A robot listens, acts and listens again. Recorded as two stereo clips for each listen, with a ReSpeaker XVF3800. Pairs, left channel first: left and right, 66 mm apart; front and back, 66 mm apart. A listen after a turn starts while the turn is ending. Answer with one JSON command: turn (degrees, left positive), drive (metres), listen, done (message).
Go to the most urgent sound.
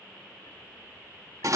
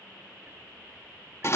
{"listen": true}
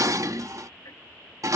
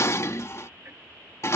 {"listen": true}
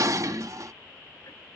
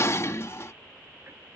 {"done": "I can't make out anything urgent to turn to."}